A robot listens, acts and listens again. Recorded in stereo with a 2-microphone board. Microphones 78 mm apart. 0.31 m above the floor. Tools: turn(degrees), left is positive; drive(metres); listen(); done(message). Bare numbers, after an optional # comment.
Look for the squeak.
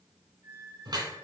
# The squeak: about 30° right or 150° right.
turn(-30)
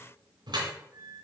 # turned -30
# So it is at 120° right.
turn(-120)
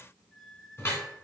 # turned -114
done("Facing the squeak.")